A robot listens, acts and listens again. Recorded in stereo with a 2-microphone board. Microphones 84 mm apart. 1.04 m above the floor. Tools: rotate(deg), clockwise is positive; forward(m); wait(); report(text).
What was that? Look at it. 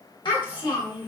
rotate(-70)
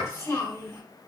rotate(-35)
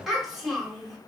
report("Found it: a child speaking, straight ahead.")